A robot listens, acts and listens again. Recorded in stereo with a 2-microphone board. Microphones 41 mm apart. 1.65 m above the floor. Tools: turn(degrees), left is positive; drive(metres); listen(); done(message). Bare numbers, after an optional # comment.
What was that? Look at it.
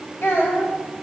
# The child speaking: about 65° left or 115° left.
turn(65)
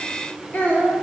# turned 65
# So it is at 40° left.
turn(40)
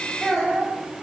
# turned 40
done("Facing the child speaking, over 4 m away.")